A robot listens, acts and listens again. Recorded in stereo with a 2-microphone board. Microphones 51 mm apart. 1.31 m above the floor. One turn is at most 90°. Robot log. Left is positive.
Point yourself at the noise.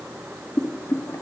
note: The boiling: about 50° left or 130° left.
cmd yaw +50
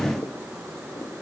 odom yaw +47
cmd idle
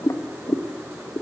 note: So it is at 80° left.
cmd yaw +80
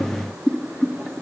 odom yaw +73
note: The boiling is now 10° left.
cmd yaw +10
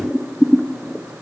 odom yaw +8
end: Facing the boiling.